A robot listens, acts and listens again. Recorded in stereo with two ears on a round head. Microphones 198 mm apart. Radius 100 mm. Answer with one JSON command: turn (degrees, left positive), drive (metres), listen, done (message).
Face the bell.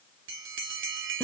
{"turn": -60}
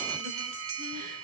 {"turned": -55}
{"turn": -65}
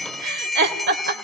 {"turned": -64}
{"done": "Facing the bell, 2 to 4 m away."}